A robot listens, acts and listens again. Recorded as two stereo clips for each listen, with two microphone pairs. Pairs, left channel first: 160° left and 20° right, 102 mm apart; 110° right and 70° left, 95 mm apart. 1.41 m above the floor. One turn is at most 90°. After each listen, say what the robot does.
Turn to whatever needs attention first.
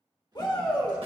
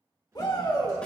Turn 90° right.
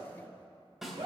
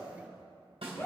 Turn 50° right.
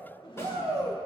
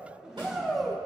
Turn 20° right.
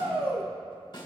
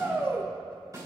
Found it: a shout, straight ahead, 1 to 2 m away.